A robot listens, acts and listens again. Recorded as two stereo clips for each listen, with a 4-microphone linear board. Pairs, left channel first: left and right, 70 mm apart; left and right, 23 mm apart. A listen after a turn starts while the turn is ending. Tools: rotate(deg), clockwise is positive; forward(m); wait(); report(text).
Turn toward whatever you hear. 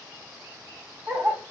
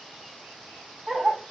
rotate(50)
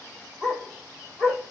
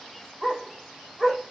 report("Found it: a dog barking, straight ahead.")